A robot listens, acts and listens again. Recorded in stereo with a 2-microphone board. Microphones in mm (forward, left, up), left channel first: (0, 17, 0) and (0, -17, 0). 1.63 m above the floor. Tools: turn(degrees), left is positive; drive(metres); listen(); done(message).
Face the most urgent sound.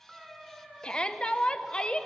turn(degrees=25)
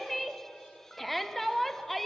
done("Found it: a shout, straight ahead, 1 to 2 m away.")